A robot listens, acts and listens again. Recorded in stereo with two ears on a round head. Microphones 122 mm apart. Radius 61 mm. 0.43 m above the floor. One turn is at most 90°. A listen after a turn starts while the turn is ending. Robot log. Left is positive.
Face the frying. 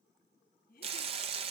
note: The frying: about 45° right or 135° right.
cmd yaw -45
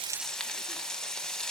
end: Found it: frying, straight ahead.